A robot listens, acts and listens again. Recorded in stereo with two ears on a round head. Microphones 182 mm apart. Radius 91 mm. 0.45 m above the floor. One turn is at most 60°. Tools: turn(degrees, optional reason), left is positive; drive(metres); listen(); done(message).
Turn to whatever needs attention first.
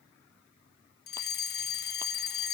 turn(degrees=50, reason="The fire alarm: about 50° left or 130° left.")
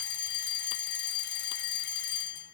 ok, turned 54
turn(degrees=60, reason="So it is at 65° left.")
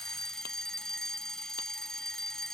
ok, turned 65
done("Facing the fire alarm.")